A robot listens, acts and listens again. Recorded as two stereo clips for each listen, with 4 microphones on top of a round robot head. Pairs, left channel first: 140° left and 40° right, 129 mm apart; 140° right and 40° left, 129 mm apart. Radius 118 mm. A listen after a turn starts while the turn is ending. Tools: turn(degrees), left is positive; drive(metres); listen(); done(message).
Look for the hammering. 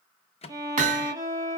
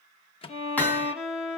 turn(degrees=-65)
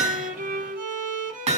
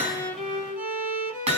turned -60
done("Found it: hammering, straight ahead.")